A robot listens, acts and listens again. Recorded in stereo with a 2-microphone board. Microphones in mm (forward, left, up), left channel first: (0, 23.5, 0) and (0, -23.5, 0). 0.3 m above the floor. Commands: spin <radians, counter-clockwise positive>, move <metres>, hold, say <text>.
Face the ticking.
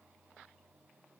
hold
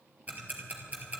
spin -0.61
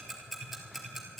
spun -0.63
say Facing the ticking, 2 to 4 m away.